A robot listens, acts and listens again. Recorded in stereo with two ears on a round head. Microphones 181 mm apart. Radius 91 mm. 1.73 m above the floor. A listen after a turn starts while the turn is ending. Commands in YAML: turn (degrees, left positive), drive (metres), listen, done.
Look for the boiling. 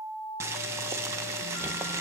turn: -30
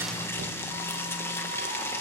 turn: 15
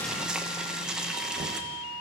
done: "Found it: boiling, straight ahead, 1 to 2 m away."